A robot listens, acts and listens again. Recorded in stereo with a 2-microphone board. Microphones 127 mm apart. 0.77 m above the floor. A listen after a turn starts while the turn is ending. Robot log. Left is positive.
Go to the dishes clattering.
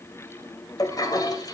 cmd idle
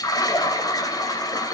cmd idle
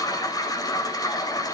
end: I can't make out dishes clattering, only a toilet flushing.